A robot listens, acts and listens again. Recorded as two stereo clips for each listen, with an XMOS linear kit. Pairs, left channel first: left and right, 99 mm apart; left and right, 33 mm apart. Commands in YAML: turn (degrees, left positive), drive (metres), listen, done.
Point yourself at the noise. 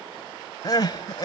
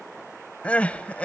turn: 45
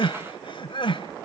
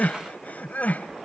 turn: 85
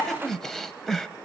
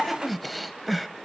done: "Found it: crying, straight ahead."